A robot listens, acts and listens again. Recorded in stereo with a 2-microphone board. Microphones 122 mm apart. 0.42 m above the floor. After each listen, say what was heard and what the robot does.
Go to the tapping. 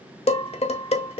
Keep listening.
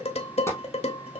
The tapping: about 25° left or 155° left. Turn 25° left.
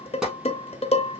Keep listening.
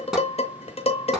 Drive 1.0 m forward.
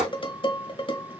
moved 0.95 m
Drive 1.0 m forward.
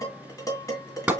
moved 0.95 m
The tapping is now 10° right. Turn 10° right.
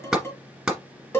Drive 1.0 m forward.
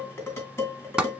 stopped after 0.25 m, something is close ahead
Arrived at the tapping, straight ahead.